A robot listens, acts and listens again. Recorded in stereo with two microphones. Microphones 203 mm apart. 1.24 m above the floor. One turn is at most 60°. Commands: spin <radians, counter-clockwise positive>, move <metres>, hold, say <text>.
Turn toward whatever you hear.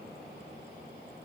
hold
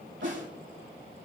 spin -1.05
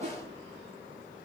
spin -0.70
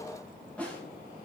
say Found it: a snare drum, straight ahead.